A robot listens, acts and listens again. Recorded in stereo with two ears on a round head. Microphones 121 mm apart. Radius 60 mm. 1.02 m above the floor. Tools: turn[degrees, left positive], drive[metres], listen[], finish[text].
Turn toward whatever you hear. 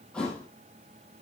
Action: turn[30]
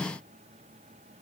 Action: listen[]
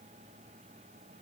Action: finish[I heard a thud, but can't make it out now. It was about 25° right or 145° left.]